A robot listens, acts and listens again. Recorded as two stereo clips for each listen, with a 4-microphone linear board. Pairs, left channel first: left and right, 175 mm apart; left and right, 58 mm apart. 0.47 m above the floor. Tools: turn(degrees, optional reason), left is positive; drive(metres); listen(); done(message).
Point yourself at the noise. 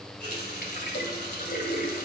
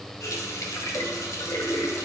turn(degrees=65, reason="The running tap: about 65° left or 115° left.")
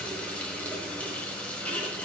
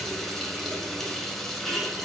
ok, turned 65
turn(degrees=10, reason="So it is at 10° left.")
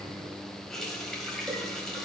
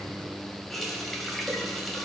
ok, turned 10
done("Found it: a running tap, straight ahead, 1 to 2 m away.")